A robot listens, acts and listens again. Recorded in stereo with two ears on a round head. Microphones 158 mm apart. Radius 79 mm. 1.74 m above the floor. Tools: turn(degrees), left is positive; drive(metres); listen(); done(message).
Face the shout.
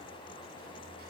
listen()
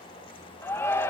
turn(degrees=30)
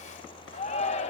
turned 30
turn(degrees=135)
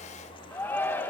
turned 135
turn(degrees=15)
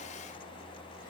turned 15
listen()
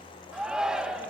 done("Found it: a shout, straight ahead, 1 to 2 m away.")